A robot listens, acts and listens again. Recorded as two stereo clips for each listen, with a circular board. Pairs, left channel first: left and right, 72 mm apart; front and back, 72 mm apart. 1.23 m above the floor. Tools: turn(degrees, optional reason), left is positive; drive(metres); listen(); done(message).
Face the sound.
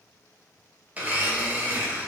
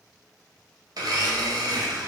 turn(degrees=-155, reason="The blender: 155° right.")
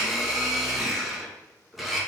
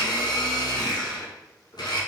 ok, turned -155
done("Found it: a blender, straight ahead.")